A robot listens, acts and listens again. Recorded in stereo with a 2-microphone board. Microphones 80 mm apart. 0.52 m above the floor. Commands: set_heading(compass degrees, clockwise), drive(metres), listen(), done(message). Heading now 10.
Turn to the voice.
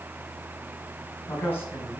set_heading(345)
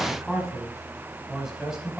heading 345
set_heading(355)
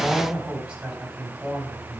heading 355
set_heading(15)
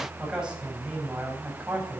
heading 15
set_heading(30)
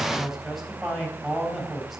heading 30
done("Found it: a man speaking, straight ahead.")